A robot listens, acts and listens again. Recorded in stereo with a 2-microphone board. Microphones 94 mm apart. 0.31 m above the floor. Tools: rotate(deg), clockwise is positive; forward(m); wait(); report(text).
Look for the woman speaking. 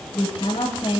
rotate(-70)
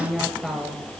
report("Facing the woman speaking, over 4 m away.")